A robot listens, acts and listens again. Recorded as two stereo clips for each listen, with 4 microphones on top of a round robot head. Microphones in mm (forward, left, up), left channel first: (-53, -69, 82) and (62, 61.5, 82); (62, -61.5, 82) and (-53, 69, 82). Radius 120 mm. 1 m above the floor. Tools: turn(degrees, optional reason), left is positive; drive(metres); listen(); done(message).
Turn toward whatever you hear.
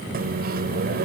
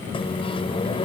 turn(degrees=10, reason="The microwave: 10° left.")
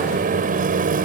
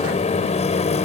done("Facing the microwave.")